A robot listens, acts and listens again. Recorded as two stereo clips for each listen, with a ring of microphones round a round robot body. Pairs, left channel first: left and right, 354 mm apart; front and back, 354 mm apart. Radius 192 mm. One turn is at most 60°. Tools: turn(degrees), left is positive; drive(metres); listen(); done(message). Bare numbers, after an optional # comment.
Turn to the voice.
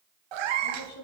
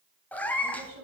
# The woman speaking: 130° left.
turn(60)
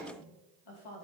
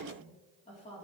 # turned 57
# The woman speaking is now 70° left.
turn(60)
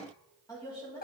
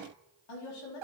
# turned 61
# The woman speaking is now 10° left.
turn(10)
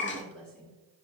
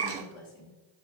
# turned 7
done("Found it: a woman speaking, straight ahead.")